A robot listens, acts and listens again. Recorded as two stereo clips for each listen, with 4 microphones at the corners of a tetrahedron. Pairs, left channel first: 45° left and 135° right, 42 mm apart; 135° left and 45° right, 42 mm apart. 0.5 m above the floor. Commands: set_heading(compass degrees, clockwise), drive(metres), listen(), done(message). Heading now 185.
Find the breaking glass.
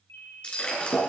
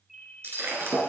set_heading(205)
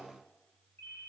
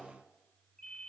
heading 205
done("I heard breaking glass from this way, but can't make it out now.")